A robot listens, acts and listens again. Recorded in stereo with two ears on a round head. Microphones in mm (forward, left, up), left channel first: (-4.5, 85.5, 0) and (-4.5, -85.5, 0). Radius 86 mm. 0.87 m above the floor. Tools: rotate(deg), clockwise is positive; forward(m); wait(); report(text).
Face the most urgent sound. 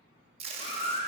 rotate(-30)
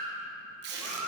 report("Facing the baby crying, 1 to 2 m away.")